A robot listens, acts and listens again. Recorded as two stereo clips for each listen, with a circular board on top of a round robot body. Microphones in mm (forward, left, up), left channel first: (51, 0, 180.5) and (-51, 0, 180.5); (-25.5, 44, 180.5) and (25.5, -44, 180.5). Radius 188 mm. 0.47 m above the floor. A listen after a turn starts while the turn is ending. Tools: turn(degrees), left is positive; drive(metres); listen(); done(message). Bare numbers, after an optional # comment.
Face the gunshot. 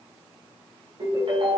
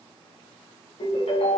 listen()
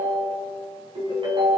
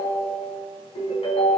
listen()
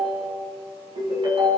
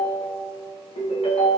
done("I can't make out a gunshot to turn to.")